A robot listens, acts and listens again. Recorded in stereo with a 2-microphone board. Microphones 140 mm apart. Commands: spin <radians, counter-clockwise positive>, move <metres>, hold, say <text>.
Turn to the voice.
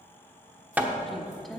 spin 0.52
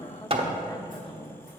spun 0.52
spin 2.53
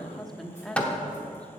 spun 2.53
say Found it: a woman speaking, straight ahead, 1 to 2 m away.